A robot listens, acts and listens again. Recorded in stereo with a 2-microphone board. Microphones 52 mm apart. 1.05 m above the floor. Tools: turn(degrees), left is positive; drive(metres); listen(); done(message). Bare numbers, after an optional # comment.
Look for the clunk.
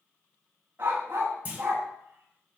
# The clunk: about 30° right or 150° right.
turn(-30)
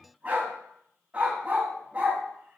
listen()
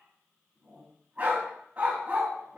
done("I heard a clunk, but can't make it out now. It was about straight ahead or 120° right.")